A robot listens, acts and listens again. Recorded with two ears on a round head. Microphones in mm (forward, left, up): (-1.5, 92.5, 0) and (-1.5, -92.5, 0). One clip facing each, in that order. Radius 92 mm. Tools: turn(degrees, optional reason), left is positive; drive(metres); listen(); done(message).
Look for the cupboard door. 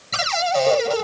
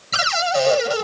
turn(degrees=-30)
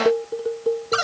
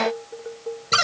turn(degrees=-140, reason="So it is at 140° right.")
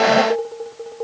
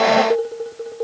listen()
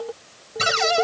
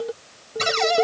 done("Facing the cupboard door.")